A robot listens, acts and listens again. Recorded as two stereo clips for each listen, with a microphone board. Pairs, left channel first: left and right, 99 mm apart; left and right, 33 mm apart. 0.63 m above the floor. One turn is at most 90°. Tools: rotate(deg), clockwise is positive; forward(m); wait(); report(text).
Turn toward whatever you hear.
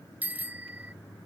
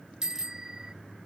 rotate(15)
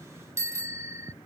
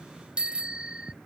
rotate(90)
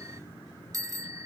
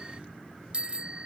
rotate(35)
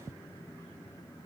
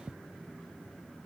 rotate(25)
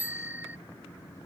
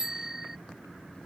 rotate(15)
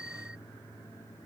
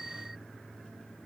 rotate(10)
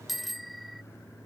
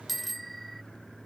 report("Found it: a bicycle bell, straight ahead.")